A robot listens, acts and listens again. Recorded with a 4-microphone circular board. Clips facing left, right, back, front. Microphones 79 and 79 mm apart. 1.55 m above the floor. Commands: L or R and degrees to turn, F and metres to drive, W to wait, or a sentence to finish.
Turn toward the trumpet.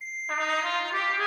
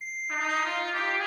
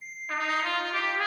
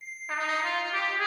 L65
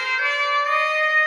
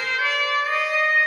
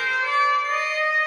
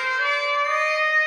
Found it: a trumpet, straight ahead.